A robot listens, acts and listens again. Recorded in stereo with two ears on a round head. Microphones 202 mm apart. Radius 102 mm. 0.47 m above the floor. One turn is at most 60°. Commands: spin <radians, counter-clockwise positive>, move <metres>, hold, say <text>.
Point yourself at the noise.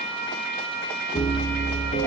spin 0.52
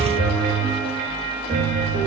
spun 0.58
spin -0.35
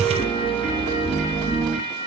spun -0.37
say Found it: a piano, straight ahead.